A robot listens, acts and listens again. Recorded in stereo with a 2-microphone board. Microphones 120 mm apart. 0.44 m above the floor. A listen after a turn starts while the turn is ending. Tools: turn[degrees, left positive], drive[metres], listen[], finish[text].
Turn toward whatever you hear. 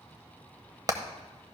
Thought: The hammering: about 35° right or 145° right.
Action: turn[-35]
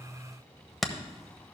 Action: finish[Facing the hammering.]